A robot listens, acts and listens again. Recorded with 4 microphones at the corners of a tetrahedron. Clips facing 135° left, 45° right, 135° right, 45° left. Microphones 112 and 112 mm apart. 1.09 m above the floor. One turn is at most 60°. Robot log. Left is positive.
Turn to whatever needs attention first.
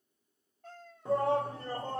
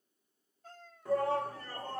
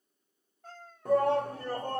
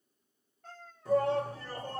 note: The shout: 165° right.
cmd yaw -60
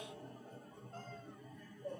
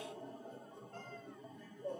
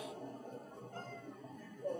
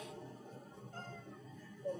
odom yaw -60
note: The shout is now 110° right.
cmd yaw -60
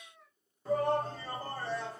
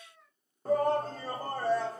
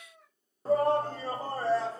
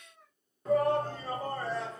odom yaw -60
note: The shout is now 80° right.
cmd yaw -60
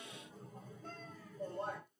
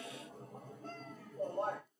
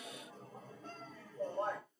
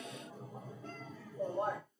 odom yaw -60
note: The shout is now 35° right.
cmd yaw -35
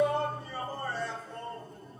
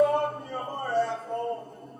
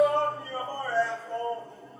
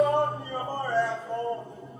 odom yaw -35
note: The shout is now 25° right.
cmd yaw -25
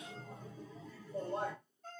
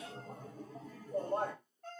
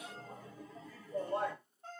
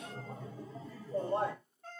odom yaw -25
note: The shout is now 15° right.
cmd yaw -15
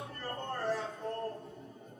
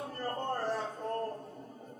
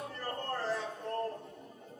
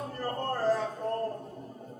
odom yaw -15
end: Facing the shout.